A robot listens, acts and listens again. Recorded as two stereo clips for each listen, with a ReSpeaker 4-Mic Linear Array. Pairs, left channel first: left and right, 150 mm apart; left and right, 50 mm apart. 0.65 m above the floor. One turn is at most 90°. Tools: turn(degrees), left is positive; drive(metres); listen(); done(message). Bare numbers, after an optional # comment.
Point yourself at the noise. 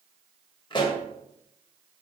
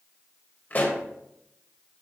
# The pop: about 35° left or 145° left.
turn(35)
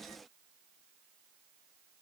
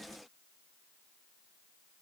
listen()
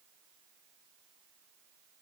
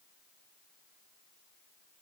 done("I heard a pop, but can't make it out now. It was about straight ahead or 110° left.")